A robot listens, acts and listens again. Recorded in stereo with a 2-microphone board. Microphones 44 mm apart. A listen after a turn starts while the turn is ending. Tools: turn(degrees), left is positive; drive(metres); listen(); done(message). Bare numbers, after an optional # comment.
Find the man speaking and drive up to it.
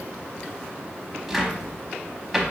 listen()
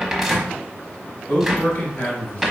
# The man speaking: about 60° left or 120° left.
turn(60)
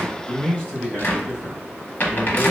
# So it is at 30° left.
turn(30)
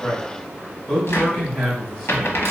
drive(1.0)
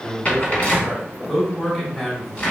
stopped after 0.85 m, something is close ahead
# The man speaking is now 10° left.
turn(10)
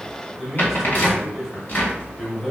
done("I am next to the man speaking.")